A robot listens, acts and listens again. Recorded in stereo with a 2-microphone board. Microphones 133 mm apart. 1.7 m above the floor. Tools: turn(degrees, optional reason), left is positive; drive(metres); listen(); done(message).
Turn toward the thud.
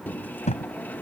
turn(degrees=60, reason="The thud: about 60° left or 120° left.")
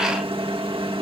listen()
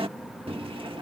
done("I heard a thud, but can't make it out now. It was about straight ahead or 60° left.")